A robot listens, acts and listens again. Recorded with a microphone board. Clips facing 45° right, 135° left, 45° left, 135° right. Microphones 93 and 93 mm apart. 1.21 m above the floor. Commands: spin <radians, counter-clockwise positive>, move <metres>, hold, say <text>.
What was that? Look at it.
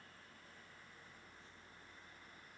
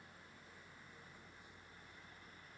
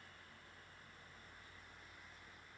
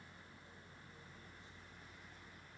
hold
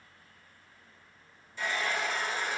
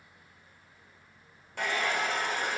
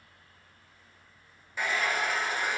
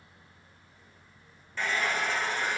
spin 2.18
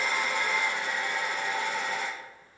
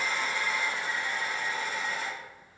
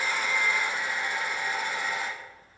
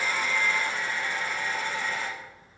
spin -0.52
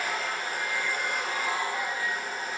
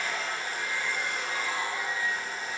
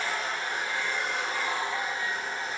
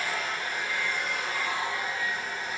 spin -0.26
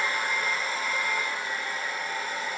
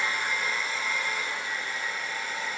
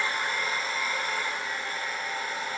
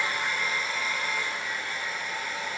say Facing the hair dryer.